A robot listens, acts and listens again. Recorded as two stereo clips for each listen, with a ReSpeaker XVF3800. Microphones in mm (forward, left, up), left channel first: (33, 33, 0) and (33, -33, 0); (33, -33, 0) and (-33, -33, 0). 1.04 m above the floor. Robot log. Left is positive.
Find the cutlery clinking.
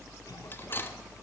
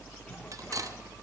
note: The cutlery clinking: 145° left.
cmd yaw +145
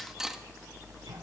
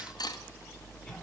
end: Facing the cutlery clinking, under 1 m away.